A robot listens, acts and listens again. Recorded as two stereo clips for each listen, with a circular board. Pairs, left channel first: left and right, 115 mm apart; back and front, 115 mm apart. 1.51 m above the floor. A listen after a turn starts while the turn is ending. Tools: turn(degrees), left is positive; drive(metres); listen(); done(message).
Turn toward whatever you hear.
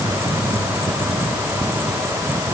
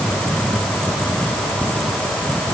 listen()
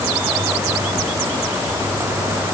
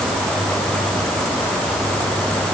listen()
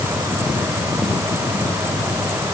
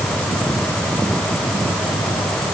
done("I can't make out anything to turn to.")